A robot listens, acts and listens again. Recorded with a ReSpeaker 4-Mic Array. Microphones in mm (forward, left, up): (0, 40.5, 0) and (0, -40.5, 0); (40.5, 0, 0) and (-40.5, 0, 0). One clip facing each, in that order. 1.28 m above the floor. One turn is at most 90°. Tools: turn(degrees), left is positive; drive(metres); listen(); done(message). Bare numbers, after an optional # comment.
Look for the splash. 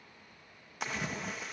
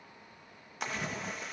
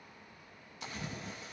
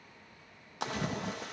# The splash: straight behind.
turn(90)
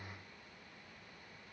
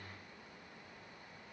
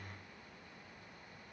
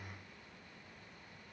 # Nothing new. It was at 90° left.
turn(90)
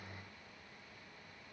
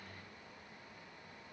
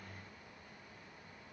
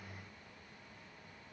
done("I heard a splash from this way, but can't make it out now.")